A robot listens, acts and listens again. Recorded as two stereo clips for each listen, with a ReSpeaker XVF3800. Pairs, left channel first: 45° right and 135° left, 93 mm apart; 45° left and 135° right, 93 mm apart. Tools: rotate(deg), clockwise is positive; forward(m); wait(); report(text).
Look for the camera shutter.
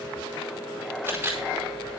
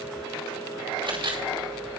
rotate(155)
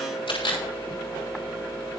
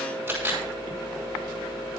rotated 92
rotate(65)
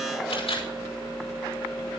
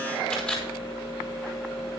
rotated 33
rotate(30)
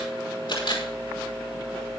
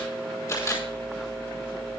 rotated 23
rotate(10)
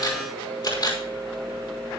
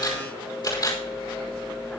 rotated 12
report("Found it: a camera shutter, straight ahead.")